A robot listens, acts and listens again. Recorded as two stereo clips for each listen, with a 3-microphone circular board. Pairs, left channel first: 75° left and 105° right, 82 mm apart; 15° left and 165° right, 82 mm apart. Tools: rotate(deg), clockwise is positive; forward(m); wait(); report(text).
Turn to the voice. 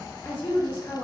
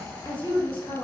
rotate(-10)
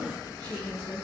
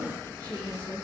report("Found it: a woman speaking, straight ahead, under 1 m away.")